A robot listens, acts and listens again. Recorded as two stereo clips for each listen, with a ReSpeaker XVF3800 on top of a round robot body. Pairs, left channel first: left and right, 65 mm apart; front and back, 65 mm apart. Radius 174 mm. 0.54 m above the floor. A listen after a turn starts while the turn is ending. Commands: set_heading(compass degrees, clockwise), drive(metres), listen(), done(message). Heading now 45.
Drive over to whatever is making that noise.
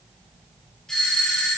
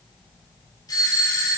set_heading(35)
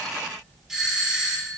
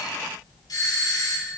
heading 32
drive(1.0)
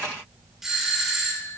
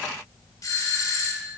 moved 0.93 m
drive(1.0)
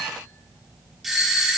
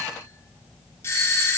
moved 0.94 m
drive(1.0)
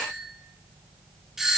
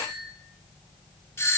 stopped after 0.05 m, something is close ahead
done("I am next to the doorbell.")